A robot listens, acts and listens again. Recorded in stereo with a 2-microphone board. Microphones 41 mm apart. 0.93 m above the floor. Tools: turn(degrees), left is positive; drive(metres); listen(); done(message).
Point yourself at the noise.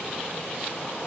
listen()
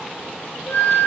turn(degrees=90)
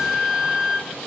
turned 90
done("Found it: a flute, straight ahead, 2 to 4 m away.")